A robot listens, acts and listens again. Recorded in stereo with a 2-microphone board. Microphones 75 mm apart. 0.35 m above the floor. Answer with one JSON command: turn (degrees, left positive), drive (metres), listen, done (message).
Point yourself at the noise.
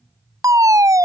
{"turn": -50}
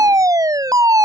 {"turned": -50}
{"turn": -65}
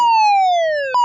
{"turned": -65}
{"turn": 10}
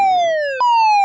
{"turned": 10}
{"done": "Facing the fire alarm."}